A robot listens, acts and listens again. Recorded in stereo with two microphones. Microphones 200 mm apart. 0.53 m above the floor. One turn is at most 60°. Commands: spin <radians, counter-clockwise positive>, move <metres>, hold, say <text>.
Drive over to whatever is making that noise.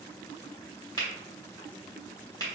spin 0.35
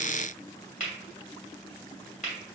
spin 1.05
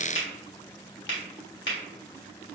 spin 1.05
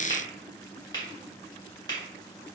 spin 0.35
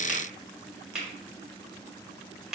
move 1.0
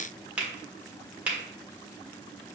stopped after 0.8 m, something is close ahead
spin -0.17
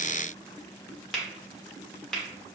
say Arrived at the finger snap, straight ahead.